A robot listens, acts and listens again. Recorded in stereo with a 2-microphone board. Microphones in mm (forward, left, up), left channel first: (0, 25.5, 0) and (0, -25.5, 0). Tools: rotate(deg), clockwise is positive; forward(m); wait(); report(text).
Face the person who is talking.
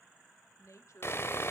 rotate(-75)
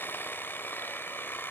wait()
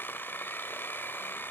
wait()
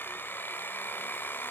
report("I heard a woman speaking, but can't make it out now. It was about straight ahead or 30° left.")